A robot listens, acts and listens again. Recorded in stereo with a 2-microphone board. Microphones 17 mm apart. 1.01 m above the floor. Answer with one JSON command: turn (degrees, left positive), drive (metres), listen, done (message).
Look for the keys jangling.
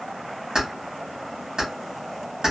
{"turn": -50}
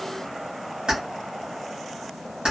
{"turn": -80}
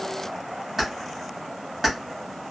{"done": "Facing the keys jangling, 1 to 2 m away."}